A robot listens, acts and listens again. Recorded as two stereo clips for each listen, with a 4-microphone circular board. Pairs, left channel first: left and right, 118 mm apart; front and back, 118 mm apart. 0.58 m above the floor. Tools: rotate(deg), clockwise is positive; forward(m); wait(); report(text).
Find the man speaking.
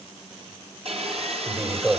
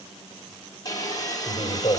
rotate(30)
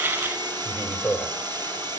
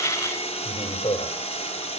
report("Found it: a man speaking, straight ahead.")